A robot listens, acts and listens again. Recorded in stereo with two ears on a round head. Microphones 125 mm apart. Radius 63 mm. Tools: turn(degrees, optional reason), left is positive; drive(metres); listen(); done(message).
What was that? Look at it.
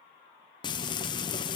turn(degrees=30, reason="The frying: about 30° left or 150° left.")
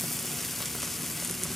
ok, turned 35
done("Facing the frying.")